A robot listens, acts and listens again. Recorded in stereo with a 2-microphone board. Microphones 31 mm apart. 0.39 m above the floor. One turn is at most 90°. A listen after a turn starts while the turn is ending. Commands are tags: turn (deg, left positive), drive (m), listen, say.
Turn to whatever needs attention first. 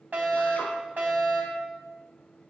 <turn deg="-65"/>
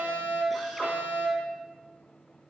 <turn deg="-35"/>
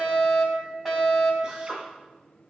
<turn deg="-10"/>
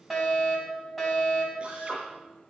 <say>Facing the fire alarm, over 4 m away.</say>